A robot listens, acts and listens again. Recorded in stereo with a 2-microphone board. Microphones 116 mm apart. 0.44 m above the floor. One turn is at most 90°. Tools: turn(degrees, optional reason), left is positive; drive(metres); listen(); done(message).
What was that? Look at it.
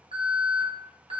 turn(degrees=-60, reason="The alarm: about 60° right or 120° right.")
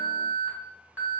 turn(degrees=-25, reason="So it is at 25° right.")
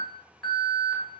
done("Found it: an alarm, straight ahead.")